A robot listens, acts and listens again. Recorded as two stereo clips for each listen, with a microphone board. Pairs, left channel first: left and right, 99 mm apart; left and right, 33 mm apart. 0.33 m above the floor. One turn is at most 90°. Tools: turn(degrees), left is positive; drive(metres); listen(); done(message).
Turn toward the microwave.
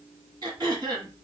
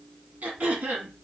listen()
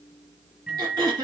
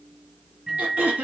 turn(degrees=-30)
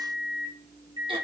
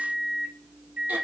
turn(degrees=-90)
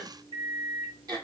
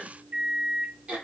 turn(degrees=-80)
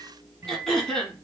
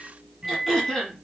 turn(degrees=-30)
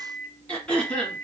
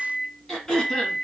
turn(degrees=-20)
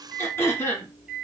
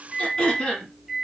done("Facing the microwave, 2 to 4 m away.")